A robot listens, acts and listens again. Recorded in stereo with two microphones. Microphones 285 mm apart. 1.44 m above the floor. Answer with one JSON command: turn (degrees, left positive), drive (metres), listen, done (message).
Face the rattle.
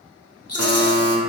{"turn": 55}
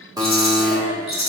{"turn": 65}
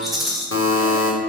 {"done": "Facing the rattle."}